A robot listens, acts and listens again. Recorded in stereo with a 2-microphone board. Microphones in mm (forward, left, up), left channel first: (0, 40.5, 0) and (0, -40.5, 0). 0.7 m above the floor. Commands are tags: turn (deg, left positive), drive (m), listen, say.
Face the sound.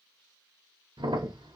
<turn deg="-70"/>
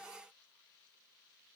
<listen/>
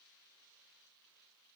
<say>I heard a crack, but can't make it out now. It was about straight ahead or 40° right.</say>